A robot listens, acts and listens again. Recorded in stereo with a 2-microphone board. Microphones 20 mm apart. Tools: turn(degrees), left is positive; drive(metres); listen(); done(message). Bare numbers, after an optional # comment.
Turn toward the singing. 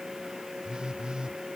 listen()
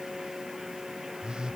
listen()
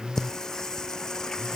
# The singing: about 30° left or 150° left.
turn(30)
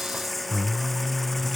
# So it is at 10° left.
turn(10)
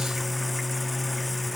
done("Found it: singing, straight ahead.")